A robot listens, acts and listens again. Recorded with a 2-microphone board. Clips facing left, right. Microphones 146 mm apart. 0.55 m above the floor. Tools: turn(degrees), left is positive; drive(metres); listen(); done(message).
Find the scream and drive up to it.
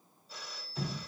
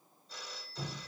listen()
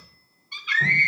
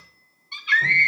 turn(degrees=-30)
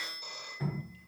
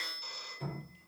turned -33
listen()
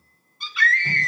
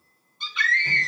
drive(metres=1.0)
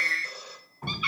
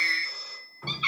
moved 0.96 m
drive(metres=1.0)
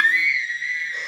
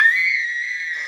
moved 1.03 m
drive(metres=1.0)
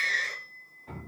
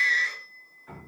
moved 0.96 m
drive(metres=1.0)
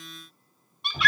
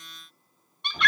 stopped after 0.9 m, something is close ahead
done("I am next to the scream.")